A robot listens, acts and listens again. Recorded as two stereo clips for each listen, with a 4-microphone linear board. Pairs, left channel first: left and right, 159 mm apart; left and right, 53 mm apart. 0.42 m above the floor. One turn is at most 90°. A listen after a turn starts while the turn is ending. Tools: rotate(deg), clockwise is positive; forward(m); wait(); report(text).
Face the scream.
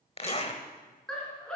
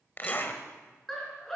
rotate(-30)
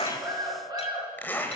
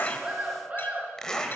rotate(25)
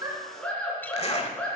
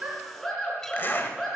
report("Facing the scream.")